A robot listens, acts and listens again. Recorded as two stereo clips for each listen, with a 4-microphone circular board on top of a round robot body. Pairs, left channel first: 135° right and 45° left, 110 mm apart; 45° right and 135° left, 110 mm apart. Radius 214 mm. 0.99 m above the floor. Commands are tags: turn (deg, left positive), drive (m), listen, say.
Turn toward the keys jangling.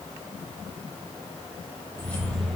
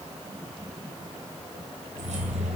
<turn deg="135"/>
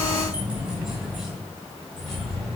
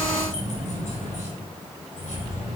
<turn deg="-50"/>
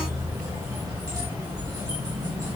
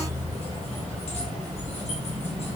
<turn deg="-15"/>
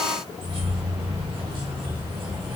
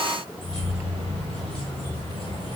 <say>Facing the keys jangling.</say>